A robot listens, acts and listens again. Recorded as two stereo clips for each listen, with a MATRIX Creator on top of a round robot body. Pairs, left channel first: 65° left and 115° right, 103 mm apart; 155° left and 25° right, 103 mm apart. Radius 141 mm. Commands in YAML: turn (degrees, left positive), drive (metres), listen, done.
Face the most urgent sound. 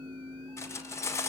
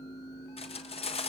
listen: true
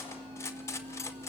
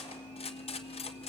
listen: true
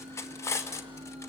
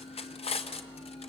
done: "I can't make out anything urgent to turn to."